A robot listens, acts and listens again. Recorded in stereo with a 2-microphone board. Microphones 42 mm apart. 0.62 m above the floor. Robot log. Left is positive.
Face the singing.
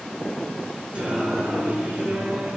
note: The singing: about 45° right or 135° right.
cmd yaw -45
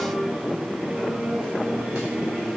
note: So it is at 65° right.
cmd yaw -65
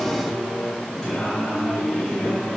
note: The singing is now 20° left.
cmd yaw +20
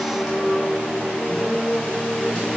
end: Facing the singing.